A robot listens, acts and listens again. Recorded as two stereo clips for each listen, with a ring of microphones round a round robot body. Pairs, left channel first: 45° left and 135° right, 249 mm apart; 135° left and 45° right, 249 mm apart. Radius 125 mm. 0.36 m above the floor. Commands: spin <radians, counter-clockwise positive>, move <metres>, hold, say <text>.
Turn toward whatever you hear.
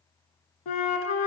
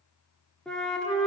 spin 0.87
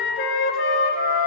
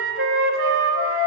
say Facing the flute, 1 to 2 m away.